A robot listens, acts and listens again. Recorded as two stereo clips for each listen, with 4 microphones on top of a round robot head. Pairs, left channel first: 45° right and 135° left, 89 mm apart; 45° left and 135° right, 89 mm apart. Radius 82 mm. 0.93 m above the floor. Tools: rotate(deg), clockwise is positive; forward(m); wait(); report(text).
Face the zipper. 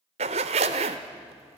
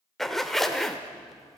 rotate(-130)
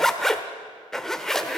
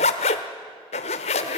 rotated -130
rotate(-40)
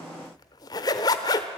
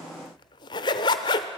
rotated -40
report("Found it: a zipper, straight ahead.")